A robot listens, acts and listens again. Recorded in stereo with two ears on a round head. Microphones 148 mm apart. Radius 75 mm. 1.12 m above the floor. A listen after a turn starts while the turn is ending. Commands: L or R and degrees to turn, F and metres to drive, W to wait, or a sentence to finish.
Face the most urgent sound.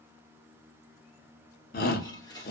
L60
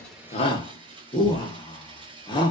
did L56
L35
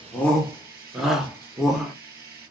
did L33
Facing the shout, under 1 m away.